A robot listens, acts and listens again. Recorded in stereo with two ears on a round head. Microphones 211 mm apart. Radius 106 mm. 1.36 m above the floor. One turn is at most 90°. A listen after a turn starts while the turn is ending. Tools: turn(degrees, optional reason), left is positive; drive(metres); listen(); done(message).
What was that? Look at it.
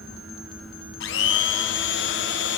turn(degrees=55, reason="The blender: about 55° left or 125° left.")
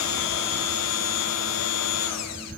turn(degrees=70, reason="So it is at 70° left.")
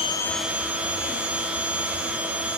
done("Found it: a blender, straight ahead, under 1 m away.")